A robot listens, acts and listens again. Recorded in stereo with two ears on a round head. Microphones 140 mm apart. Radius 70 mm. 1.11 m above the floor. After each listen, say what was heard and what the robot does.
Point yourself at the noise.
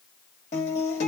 The guitar: about 45° left or 135° left. Turn 45° left.
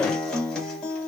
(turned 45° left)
Facing the guitar, 1 to 2 m away.